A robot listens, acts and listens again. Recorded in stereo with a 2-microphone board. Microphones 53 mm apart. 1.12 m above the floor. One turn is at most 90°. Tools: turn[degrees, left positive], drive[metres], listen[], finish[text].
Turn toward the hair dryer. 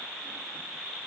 Action: listen[]
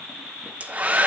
Thought: The hair dryer: about 30° right or 150° right.
Action: turn[-30]
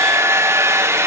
Thought: So it is at 120° right.
Action: turn[-90]
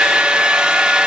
Thought: The hair dryer is now 20° right.
Action: turn[-20]
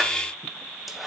Action: listen[]
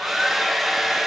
Action: finish[Facing the hair dryer.]